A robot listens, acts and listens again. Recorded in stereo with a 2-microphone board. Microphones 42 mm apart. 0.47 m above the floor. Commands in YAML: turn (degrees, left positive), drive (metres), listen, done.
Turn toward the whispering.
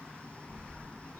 listen: true
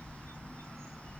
listen: true
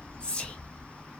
turn: 25
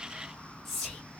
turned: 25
done: "Facing the whispering, 1 to 2 m away."